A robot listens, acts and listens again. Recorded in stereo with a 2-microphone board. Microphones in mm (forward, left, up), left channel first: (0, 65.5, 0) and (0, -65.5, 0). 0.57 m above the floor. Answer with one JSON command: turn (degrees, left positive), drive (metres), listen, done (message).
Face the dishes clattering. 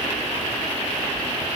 {"listen": true}
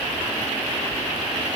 {"listen": true}
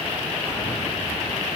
{"done": "I can't make out dishes clattering."}